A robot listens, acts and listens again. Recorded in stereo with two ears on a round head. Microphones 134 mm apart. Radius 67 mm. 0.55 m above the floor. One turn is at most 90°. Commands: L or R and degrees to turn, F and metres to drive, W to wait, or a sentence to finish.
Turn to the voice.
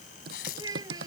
R25
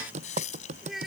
Facing the child speaking.